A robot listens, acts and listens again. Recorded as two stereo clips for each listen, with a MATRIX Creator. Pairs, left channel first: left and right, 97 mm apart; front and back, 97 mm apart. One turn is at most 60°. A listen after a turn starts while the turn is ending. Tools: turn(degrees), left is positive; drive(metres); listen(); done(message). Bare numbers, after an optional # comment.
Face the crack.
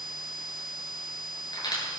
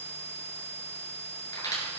# The crack: 50° left.
turn(50)
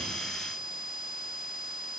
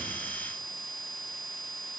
done("I heard a crack from this way, but can't make it out now.")